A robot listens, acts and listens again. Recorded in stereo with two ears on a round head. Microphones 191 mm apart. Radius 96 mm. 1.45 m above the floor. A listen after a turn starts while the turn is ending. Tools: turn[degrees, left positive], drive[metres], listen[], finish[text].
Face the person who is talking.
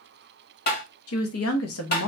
Thought: The woman speaking: about 70° left or 110° left.
Action: turn[70]
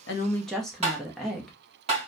Action: finish[Found it: a woman speaking, straight ahead, under 1 m away.]